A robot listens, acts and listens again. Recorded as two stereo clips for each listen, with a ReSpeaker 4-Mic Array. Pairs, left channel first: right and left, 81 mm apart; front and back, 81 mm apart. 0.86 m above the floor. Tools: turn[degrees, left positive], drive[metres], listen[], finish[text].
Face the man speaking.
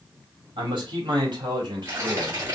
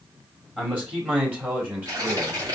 Thought: The man speaking: 110° left.
Action: turn[110]
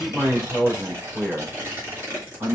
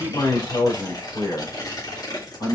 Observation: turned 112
Thought: The man speaking is now 15° left.
Action: turn[15]
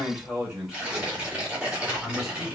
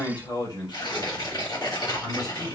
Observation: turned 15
Action: finish[Found it: a man speaking, straight ahead.]